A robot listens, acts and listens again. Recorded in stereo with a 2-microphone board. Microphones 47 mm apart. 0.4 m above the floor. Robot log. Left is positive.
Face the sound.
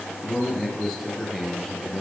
cmd yaw +30
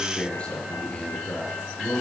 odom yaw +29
note: So it is at 155° left.
cmd yaw +155
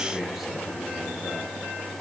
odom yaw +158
end: Found it: a man speaking, straight ahead, over 4 m away.